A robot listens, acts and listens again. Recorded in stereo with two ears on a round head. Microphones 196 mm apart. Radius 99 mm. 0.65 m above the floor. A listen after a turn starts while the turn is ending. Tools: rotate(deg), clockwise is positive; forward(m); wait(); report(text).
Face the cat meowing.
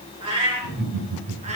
rotate(35)
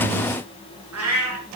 rotate(100)
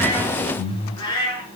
rotate(-20)
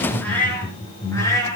rotate(-15)
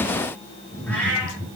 report("Facing the cat meowing.")